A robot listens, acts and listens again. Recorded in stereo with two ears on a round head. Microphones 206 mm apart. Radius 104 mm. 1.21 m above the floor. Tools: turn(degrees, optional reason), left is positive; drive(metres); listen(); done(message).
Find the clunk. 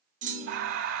turn(degrees=-35, reason="The clunk: about 35° right or 145° right.")
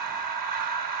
listen()
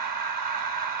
done("I heard a clunk, but can't make it out now. It was about straight ahead or 110° right.")